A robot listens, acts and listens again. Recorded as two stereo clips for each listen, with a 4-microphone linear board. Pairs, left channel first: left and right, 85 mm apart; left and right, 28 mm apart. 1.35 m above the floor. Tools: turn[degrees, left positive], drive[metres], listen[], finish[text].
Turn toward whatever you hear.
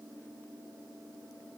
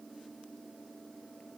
Action: listen[]
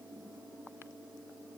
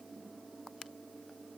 Action: listen[]
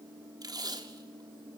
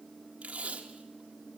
Thought: The tape being pulled: about 50° right or 130° right.
Action: turn[-50]
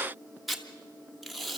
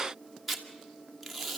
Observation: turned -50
Action: finish[Found it: tape being pulled, straight ahead, 1 to 2 m away.]